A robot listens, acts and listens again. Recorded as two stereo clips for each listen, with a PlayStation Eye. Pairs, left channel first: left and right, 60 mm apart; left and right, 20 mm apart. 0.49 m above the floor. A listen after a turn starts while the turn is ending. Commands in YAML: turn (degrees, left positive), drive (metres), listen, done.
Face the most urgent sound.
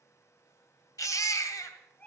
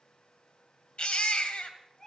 turn: 90
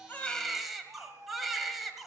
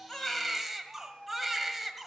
done: "Facing the baby crying."